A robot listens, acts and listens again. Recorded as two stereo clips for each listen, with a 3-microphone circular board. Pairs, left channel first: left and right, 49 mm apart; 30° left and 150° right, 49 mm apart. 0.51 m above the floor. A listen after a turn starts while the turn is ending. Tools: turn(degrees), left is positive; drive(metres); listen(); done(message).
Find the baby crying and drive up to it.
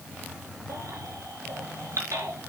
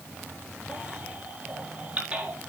turn(degrees=-85)
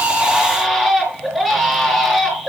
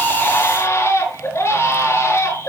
drive(metres=1.0)
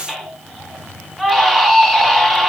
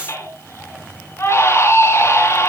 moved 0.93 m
drive(metres=1.0)
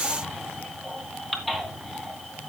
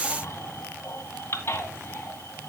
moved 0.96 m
drive(metres=1.0)
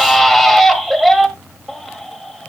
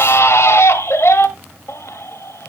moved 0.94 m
drive(metres=1.0)
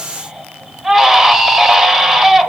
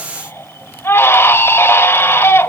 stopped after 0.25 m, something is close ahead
turn(degrees=-10)
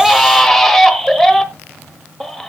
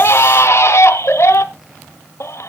done("I am next to the baby crying.")